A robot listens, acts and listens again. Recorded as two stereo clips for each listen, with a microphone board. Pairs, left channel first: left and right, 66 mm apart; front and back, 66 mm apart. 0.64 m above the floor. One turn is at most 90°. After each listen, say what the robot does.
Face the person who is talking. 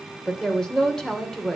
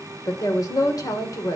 Turn 10° left.
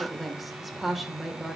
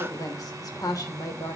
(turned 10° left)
Found it: a woman speaking, straight ahead.